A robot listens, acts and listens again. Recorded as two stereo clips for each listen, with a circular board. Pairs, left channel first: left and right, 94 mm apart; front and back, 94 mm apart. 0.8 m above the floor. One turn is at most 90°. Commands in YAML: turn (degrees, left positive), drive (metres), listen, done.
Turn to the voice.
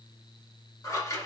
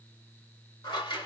listen: true
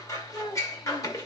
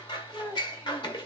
turn: 60
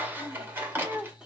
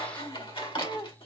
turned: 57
turn: -10
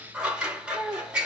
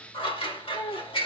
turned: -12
turn: -10
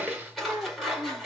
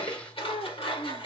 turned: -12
turn: -15
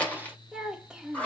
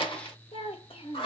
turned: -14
turn: -10
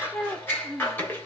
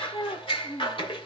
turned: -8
done: "Facing the child speaking, 1 to 2 m away."